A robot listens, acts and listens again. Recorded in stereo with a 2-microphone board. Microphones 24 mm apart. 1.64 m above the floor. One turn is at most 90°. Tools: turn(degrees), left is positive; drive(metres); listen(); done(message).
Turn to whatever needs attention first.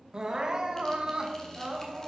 turn(degrees=-35)
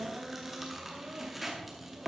turn(degrees=-90)
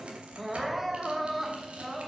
turn(degrees=-10)
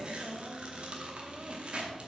listen()
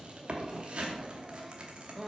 done("Found it: crying, straight ahead, 1 to 2 m away.")